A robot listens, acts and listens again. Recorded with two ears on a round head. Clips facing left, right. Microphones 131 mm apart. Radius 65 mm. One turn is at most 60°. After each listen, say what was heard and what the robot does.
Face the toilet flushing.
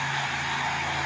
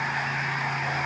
Keep listening.
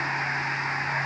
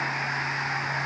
Keep listening.
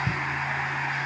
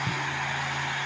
I can't make out a toilet flushing to turn to.